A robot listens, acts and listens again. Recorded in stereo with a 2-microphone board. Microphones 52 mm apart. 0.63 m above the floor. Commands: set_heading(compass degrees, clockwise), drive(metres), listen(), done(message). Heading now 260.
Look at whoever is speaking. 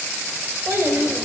set_heading(310)
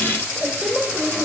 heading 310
done("Found it: a child speaking, straight ahead, 1 to 2 m away.")